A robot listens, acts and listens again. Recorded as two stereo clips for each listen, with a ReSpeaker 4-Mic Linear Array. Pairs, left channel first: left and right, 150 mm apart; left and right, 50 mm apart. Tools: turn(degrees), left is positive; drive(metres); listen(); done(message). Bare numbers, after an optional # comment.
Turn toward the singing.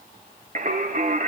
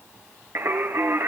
# The singing: about 60° right or 120° right.
turn(-60)
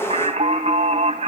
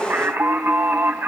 # So it is at 55° right.
turn(-55)
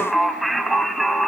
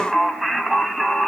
done("Found it: singing, straight ahead, 1 to 2 m away.")